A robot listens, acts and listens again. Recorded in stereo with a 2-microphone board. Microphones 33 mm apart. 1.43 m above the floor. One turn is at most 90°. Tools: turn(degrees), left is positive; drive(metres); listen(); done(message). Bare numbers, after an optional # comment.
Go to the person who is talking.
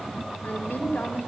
turn(90)
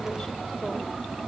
listen()
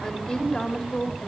# The woman speaking is now 10° left.
turn(10)
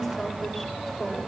drive(1.0)
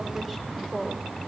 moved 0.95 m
drive(1.0)
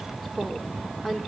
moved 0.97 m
# The woman speaking is now 10° right.
turn(-10)
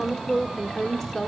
drive(1.0)
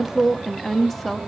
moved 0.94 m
drive(1.0)
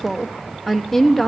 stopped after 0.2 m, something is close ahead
done("Arrived at the woman speaking, straight ahead.")